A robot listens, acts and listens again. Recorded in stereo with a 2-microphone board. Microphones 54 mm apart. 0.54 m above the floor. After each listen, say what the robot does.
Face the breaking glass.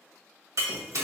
Turn 75° right.
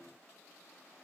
Keep listening.
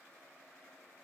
I heard breaking glass, but can't make it out now. It was about straight ahead or 30° right.